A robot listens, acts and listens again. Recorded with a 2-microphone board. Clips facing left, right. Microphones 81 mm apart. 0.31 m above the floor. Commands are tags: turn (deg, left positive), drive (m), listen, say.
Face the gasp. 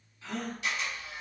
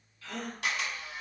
<turn deg="20"/>
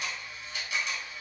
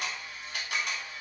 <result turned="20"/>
<listen/>
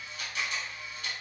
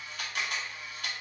<say>I heard a gasp, but can't make it out now. It was about straight ahead or 140° left.</say>